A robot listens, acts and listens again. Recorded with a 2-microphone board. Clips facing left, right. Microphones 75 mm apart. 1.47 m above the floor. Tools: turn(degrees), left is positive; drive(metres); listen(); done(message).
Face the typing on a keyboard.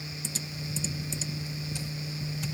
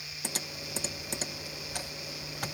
turn(degrees=-60)
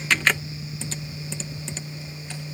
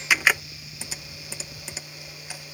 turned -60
turn(degrees=-10)
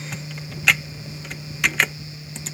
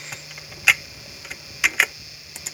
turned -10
done("Found it: typing on a keyboard, straight ahead.")